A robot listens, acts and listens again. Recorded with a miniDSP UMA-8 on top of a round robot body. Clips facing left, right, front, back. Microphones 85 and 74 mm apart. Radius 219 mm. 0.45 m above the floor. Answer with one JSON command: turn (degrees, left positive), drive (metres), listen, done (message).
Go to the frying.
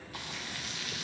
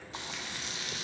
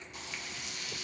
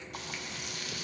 {"turn": -155}
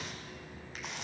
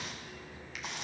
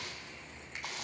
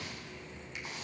{"drive": 1.0}
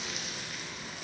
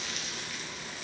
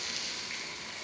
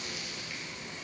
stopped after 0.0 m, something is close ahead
{"done": "Blocked. The frying is further on, straight ahead."}